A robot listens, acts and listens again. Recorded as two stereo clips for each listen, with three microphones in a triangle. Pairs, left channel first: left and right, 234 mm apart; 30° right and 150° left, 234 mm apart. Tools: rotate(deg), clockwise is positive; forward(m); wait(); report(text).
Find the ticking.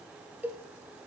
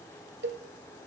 wait()
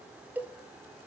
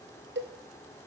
wait()
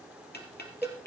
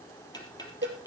rotate(-40)
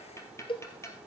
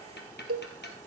rotate(-10)
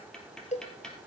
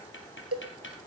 report("Facing the ticking.")